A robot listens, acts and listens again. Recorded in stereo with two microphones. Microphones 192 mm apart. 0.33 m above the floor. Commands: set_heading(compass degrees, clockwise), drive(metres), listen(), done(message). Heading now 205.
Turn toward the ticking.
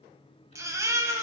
listen()
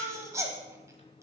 listen()
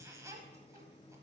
done("I can't make out ticking to turn to.")